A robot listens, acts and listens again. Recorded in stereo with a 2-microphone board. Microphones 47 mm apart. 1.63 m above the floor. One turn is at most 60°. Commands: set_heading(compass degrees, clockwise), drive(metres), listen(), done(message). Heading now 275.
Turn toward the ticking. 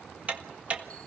set_heading(305)
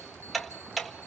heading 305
done("Found it: ticking, straight ahead, 1 to 2 m away.")